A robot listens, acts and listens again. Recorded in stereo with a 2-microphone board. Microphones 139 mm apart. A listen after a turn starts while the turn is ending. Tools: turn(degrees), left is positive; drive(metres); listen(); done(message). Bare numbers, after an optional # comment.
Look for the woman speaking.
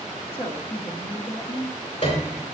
# The woman speaking: about 45° left or 135° left.
turn(45)
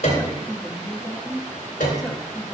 done("Found it: a woman speaking, straight ahead.")